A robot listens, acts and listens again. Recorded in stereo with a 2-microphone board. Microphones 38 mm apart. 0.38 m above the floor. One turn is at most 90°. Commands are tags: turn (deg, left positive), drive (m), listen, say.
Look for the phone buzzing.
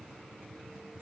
<listen/>
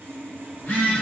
<turn deg="65"/>
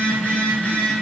<turn deg="40"/>
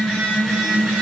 <say>Found it: a phone buzzing, straight ahead, 1 to 2 m away.</say>